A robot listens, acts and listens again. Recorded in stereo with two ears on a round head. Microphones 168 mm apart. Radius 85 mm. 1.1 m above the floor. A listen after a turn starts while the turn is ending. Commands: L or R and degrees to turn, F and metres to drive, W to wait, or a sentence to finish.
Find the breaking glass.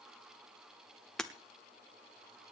L30
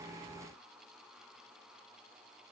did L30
W
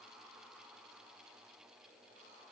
I heard breaking glass, but can't make it out now. It was about 25° right or 145° left.